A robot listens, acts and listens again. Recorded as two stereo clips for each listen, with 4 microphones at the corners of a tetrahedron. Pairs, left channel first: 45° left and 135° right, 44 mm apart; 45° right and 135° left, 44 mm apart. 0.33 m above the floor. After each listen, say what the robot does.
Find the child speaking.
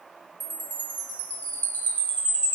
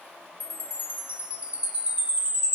Keep listening.
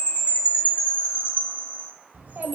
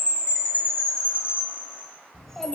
Turn 125° right.
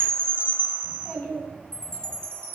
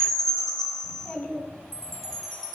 Found it: a child speaking, straight ahead, 2 to 4 m away.